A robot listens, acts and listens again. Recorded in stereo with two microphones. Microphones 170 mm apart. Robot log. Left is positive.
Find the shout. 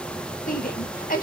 note: The shout: about 60° left or 120° left.
cmd yaw +60
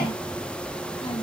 cmd idle
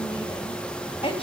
note: So it is at 40° left.
cmd yaw +40
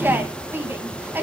note: The shout is now 15° right.
cmd yaw -15
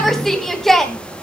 end: Facing the shout, 2 to 4 m away.